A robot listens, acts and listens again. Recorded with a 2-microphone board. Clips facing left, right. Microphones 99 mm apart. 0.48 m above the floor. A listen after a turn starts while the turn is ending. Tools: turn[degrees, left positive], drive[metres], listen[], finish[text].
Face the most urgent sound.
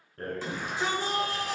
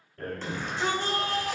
Action: turn[30]
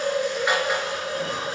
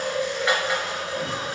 Action: listen[]
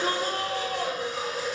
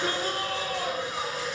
Thought: So it is at 140° left.
Action: turn[140]
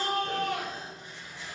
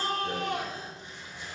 Thought: The shout is now 30° right.
Action: turn[-30]
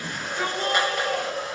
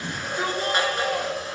Thought: The shout is now 10° right.
Action: turn[-10]
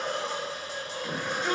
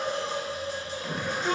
Action: finish[Facing the shout.]